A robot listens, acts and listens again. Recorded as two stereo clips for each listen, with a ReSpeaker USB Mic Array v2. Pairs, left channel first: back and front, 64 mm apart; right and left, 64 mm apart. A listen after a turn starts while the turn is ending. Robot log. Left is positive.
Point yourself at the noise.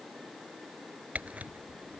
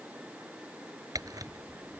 note: The camera shutter: 65° left.
cmd yaw +65
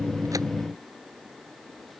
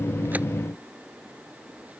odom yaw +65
cmd idle
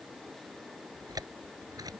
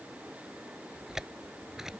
end: Facing the camera shutter.